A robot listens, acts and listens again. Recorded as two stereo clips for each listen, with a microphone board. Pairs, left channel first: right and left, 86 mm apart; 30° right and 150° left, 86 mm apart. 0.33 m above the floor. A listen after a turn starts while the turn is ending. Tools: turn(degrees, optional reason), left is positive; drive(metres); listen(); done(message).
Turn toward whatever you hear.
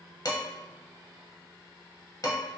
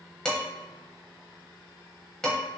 turn(degrees=-110, reason="The dishes clattering: 110° right.")
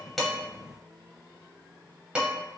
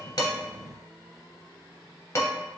turn(degrees=15, reason="The dishes clattering is now 15° left.")
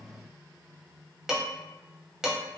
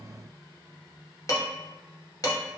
turn(degrees=10, reason="The dishes clattering is now 10° left.")
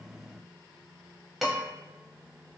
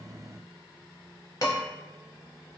done("Found it: dishes clattering, straight ahead.")